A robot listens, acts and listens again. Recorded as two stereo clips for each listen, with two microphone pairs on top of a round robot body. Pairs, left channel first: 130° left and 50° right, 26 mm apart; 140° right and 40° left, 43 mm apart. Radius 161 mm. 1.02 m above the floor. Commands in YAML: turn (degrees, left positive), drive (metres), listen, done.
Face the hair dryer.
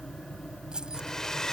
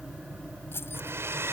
turn: 55
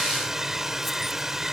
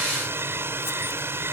turn: 20
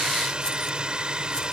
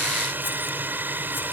done: "Found it: a hair dryer, straight ahead."